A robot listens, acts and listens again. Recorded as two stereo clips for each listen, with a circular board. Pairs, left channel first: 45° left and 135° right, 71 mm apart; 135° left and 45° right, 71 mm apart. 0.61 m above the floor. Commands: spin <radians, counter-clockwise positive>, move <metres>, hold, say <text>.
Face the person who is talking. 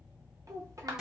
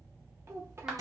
spin -1.66
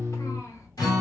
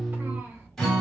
hold
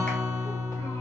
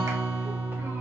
hold
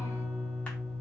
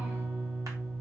say Facing where the child speaking came from. I can't hear it now.